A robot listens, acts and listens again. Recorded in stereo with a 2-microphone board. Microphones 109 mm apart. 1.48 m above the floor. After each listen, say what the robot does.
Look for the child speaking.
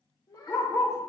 Turn 35° left.
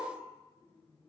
Keep listening.
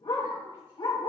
Keep listening.
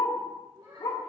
Turn 50° right.
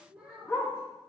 Turn 10° right.
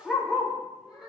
Facing the child speaking, over 4 m away.